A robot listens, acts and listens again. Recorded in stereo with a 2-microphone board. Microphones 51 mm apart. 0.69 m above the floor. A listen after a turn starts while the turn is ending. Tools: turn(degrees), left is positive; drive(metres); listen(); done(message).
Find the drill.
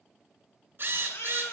turn(degrees=-50)
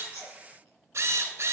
turn(degrees=-75)
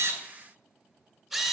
done("Found it: a drill, straight ahead.")